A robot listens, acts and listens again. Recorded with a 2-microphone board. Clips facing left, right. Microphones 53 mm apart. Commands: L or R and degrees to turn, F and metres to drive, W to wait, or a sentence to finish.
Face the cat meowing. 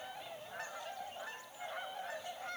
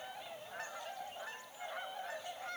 W
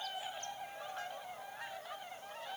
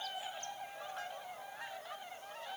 W
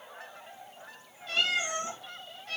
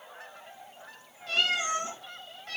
R60
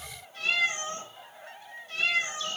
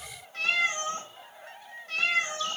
R60
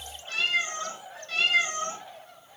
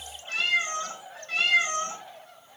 R20
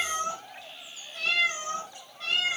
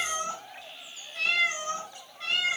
Facing the cat meowing, 1 to 2 m away.